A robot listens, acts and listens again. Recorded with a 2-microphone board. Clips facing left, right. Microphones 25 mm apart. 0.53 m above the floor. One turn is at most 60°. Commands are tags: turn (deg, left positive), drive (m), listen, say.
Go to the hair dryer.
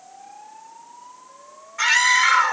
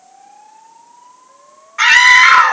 <listen/>
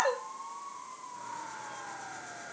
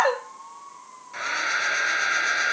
<turn deg="-60"/>
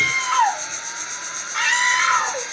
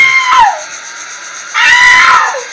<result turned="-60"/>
<turn deg="-30"/>
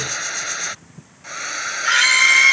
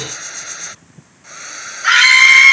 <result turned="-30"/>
<turn deg="20"/>
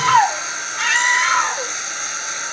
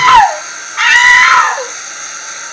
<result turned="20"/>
<drive m="1.0"/>
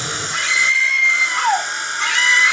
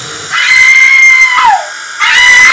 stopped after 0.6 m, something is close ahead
<turn deg="-10"/>
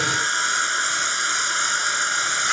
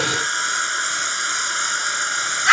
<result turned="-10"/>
<say>Blocked. The hair dryer is further on, straight ahead.</say>